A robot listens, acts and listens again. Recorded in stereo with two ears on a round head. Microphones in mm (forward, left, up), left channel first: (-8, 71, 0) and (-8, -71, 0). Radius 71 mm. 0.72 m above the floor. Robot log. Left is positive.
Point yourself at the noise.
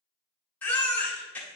cmd yaw +30
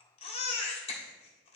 note: So it is at 140° left.
cmd yaw +140
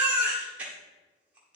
note: The baby crying is now 10° right.
cmd yaw -10
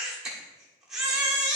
end: Found it: a baby crying, straight ahead.